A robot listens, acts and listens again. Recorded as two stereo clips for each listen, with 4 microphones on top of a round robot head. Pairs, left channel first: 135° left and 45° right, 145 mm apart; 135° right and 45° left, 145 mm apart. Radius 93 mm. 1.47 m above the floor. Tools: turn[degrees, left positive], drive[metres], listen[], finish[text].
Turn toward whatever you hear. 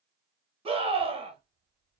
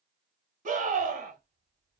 Thought: The scream: 10° left.
Action: turn[10]
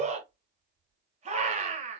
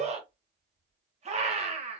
Action: finish[Found it: a scream, straight ahead, 1 to 2 m away.]